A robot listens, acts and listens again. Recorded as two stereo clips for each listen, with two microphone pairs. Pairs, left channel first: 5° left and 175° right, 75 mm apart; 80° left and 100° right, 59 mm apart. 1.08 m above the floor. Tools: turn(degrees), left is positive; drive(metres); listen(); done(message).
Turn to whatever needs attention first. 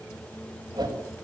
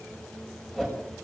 listen()
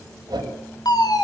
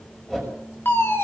turn(degrees=30)
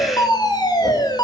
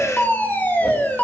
turn(degrees=20)
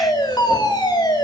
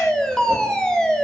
done("Facing the fire alarm.")